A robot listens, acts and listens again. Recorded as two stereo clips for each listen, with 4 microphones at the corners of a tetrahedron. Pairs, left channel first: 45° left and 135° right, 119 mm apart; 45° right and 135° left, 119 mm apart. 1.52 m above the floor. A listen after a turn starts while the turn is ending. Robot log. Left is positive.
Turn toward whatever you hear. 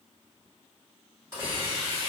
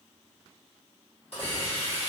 note: The hiss: 70° right.
cmd yaw -70
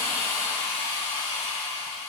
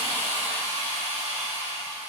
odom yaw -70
note: The hiss is now 15° left.
cmd yaw +15
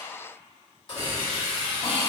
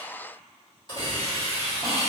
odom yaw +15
end: Facing the hiss.